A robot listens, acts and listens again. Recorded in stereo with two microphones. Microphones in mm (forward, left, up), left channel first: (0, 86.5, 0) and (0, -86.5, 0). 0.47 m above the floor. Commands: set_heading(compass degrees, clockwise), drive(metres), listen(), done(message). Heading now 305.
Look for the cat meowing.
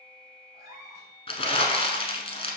set_heading(325)
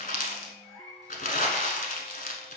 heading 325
set_heading(305)
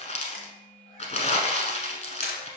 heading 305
listen()
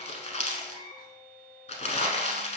set_heading(280)
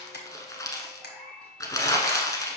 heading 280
done("Facing the cat meowing, 2 to 4 m away.")